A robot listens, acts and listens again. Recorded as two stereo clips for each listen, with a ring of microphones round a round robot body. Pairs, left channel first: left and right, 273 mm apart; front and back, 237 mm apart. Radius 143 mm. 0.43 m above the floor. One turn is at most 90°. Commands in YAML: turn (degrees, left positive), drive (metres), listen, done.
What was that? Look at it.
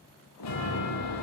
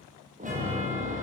turn: 90
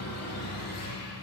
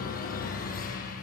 turn: 55
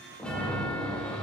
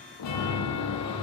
done: "Found it: a chime, straight ahead."